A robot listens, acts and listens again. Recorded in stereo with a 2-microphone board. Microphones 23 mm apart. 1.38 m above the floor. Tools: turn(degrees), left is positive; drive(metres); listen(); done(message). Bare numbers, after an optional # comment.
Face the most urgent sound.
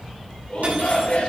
# The shout: about 65° left or 115° left.
turn(65)
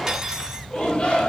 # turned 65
# So it is at 50° left.
turn(50)
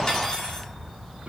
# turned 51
listen()
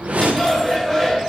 done("Facing the shout, 2 to 4 m away.")